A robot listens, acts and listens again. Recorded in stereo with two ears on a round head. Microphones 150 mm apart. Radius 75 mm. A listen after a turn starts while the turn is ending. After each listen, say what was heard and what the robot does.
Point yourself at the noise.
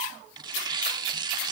The tearing paper: about 25° right or 155° right. Turn 25° right.
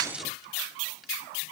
Keep listening.
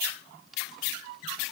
Keep listening.
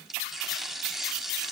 Found it: tearing paper, straight ahead.